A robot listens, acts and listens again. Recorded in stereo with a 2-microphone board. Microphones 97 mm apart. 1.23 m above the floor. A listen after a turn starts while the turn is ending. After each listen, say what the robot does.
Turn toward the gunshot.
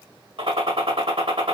Turn 75° right.
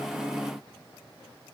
Keep listening.
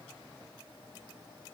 I heard a gunshot, but can't make it out now. It was about straight ahead or 30° right.